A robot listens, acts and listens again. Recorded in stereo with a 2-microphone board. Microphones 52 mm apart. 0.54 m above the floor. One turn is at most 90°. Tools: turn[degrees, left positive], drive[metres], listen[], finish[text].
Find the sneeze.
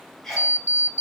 Action: turn[30]
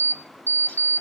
Action: listen[]
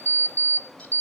Action: finish[I heard a sneeze, but can't make it out now. It was about 25° right or 145° left.]